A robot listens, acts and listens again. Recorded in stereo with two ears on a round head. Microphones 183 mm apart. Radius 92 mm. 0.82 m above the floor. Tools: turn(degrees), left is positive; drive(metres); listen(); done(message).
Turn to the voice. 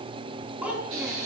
turn(degrees=-30)
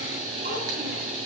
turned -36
listen()
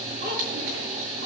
listen()
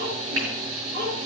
turn(degrees=-125)
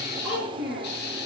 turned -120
done("Found it: a child speaking, straight ahead, over 4 m away.")